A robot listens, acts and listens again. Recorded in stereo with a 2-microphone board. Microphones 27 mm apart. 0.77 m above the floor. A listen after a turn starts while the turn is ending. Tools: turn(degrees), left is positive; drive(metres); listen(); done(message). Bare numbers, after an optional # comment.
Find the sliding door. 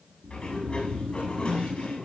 # The sliding door: about 40° left or 140° left.
turn(40)
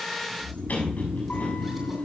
# So it is at 105° left.
turn(105)
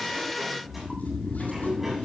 listen()
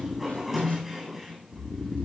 done("Facing the sliding door.")